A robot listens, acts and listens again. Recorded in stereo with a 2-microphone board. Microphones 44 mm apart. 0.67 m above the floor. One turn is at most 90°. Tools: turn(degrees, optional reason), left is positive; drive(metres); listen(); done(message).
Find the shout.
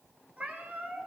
listen()
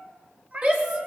turn(degrees=-40, reason="The shout: about 40° right or 140° right.")
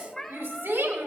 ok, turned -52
turn(degrees=-90, reason="So it is at 90° right.")
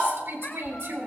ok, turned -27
turn(degrees=-65, reason="The shout is now 65° right.")
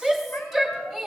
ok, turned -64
done("Facing the shout.")